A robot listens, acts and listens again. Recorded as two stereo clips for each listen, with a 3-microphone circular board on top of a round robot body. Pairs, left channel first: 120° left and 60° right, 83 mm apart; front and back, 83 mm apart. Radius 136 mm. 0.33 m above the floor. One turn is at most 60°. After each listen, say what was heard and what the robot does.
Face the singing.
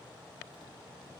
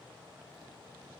Keep listening.
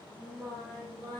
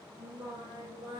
The singing: 160° right. Turn 60° right.
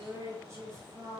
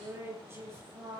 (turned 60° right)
The singing is now 120° right. Turn 60° right.
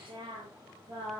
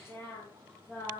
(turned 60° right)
The singing is now 65° right. Turn 60° right.
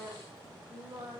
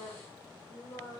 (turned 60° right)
Facing the singing, over 4 m away.